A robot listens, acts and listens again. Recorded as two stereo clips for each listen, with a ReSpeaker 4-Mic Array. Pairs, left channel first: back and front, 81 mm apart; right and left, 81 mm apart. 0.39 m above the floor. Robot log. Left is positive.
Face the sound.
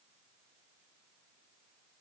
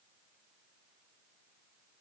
cmd idle
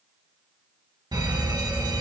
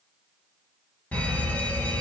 note: The fire alarm: 20° right.
cmd yaw -20
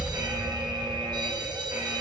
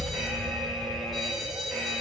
end: Found it: a fire alarm, straight ahead.